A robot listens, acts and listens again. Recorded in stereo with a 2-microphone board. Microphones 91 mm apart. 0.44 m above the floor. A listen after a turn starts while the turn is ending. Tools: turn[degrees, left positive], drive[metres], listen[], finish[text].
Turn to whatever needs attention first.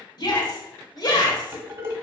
Thought: The shout: about 55° left or 125° left.
Action: turn[55]
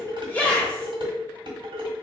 Thought: So it is at 15° left.
Action: turn[15]
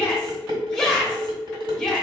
Action: finish[Facing the shout.]